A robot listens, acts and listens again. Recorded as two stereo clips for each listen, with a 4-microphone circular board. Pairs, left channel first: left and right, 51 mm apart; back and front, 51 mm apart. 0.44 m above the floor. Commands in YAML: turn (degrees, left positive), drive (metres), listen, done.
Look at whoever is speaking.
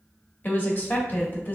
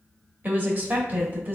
turn: 45
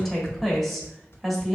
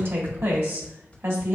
done: "Found it: a woman speaking, straight ahead."